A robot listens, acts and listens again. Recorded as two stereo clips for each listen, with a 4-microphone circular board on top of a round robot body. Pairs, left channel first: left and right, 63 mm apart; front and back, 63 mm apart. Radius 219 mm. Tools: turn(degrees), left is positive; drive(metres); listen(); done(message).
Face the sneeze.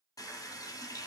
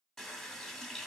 listen()
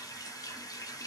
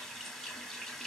listen()
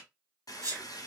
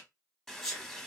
turn(degrees=-85)
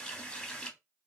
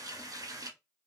done("I heard a sneeze from this way, but can't make it out now.")